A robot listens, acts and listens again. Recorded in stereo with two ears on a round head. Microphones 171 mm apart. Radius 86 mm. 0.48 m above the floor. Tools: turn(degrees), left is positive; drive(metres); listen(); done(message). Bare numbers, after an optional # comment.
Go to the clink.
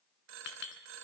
# The clink: about 70° left or 110° left.
turn(70)
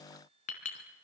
# So it is at 40° left.
turn(40)
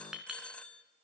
drive(1.0)
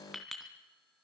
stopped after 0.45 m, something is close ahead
done("Blocked. The clink is further on, straight ahead.")